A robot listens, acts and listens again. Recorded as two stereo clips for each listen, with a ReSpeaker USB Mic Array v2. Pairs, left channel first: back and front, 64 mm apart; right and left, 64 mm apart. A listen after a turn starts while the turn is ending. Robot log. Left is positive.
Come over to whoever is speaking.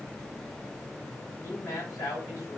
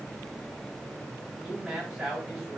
note: The man speaking: 175° left.
cmd yaw +175
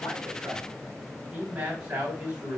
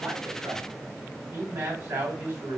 note: The man speaking is now 65° left.
cmd yaw +65
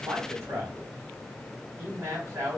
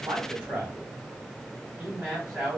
note: The man speaking is now 20° left.
cmd yaw +20
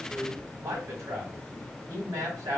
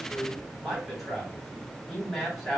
cmd fwd 1.0
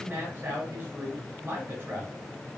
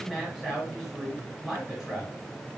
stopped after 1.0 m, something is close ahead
note: The man speaking is now 15° left.
cmd yaw +15
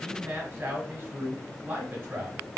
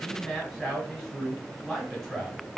end: Arrived at the man speaking, straight ahead.